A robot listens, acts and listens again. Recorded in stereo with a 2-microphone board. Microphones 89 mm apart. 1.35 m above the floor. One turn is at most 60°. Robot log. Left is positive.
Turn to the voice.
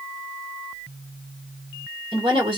cmd yaw -60
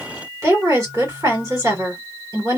note: So it is at 40° right.
cmd yaw -40
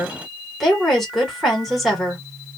end: Found it: a woman speaking, straight ahead, 1 to 2 m away.